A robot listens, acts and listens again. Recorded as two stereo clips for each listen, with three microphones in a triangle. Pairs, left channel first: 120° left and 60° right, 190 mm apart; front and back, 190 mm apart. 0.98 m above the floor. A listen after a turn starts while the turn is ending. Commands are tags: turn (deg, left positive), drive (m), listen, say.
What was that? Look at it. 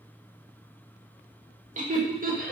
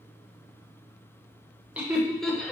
<turn deg="-80"/>
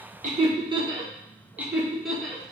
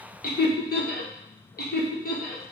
<turn deg="35"/>
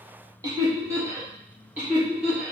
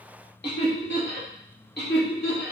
<turn deg="25"/>
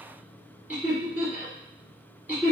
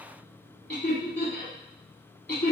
<turn deg="20"/>
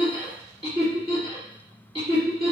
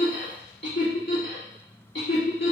<say>Found it: laughter, straight ahead, 2 to 4 m away.</say>